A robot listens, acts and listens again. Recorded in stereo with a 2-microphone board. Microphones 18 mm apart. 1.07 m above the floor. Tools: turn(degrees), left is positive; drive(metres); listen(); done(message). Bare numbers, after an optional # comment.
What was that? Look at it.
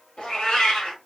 # The cat meowing: about 60° left or 120° left.
turn(60)
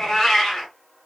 # So it is at 15° left.
turn(15)
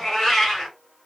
done("Facing the cat meowing.")